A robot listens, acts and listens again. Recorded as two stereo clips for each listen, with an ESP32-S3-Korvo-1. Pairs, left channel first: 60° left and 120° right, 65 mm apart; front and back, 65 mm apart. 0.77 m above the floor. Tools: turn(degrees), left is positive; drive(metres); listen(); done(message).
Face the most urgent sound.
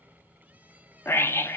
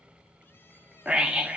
turn(degrees=105)
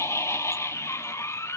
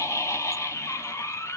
turn(degrees=30)
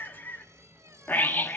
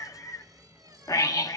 done("Found it: a scream, straight ahead, 1 to 2 m away.")